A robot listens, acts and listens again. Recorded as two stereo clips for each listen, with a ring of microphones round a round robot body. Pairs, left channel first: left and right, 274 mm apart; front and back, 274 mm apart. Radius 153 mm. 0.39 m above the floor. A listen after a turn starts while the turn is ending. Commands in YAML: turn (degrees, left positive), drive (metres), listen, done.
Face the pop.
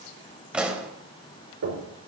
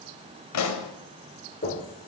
done: "Found it: a pop, straight ahead, 1 to 2 m away."